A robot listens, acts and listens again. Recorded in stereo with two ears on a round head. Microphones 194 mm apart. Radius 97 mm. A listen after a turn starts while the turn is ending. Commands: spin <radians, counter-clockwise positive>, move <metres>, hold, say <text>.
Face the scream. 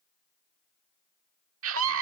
spin -1.13
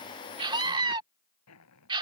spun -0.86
spin -0.44
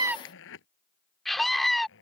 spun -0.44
say Facing the scream.